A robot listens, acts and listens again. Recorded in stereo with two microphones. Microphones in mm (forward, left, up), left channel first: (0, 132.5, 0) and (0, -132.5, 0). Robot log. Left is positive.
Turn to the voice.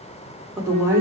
cmd yaw -30
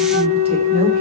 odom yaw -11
cmd idle
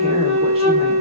cmd idle
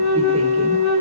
end: I heard a woman speaking, but can't make it out now. It was about straight ahead or 160° right.